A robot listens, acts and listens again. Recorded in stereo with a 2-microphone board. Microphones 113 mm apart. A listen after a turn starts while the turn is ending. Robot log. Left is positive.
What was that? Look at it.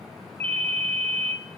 note: The ringtone: about 70° right or 110° right.
cmd yaw -70
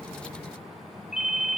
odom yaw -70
end: Facing the ringtone, 1 to 2 m away.